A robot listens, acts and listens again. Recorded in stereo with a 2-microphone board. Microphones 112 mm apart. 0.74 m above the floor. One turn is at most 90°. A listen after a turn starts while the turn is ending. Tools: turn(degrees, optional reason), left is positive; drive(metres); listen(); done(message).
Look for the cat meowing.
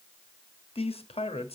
listen()
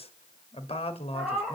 turn(degrees=-30)
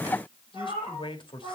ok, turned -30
turn(degrees=-90, reason="So it is at 145° right.")
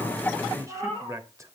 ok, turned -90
turn(degrees=-60, reason="The cat meowing is now 60° right.")
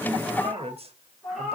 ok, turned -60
done("Facing the cat meowing, over 4 m away.")